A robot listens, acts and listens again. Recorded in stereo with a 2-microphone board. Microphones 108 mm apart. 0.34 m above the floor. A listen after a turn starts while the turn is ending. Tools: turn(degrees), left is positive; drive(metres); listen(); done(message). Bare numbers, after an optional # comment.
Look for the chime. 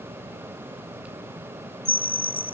# The chime: about 55° right or 125° right.
turn(-55)
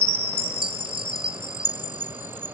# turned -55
# So it is at 65° right.
turn(-65)
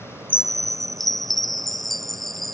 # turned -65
done("Facing the chime.")